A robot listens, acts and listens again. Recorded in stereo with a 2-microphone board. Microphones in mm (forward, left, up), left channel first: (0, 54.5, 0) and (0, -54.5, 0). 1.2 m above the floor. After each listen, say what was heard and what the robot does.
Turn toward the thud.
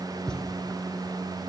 Turn 30° left.
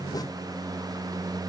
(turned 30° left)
Keep listening.
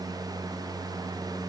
I heard a thud, but can't make it out now. It was about 25° right or 145° left.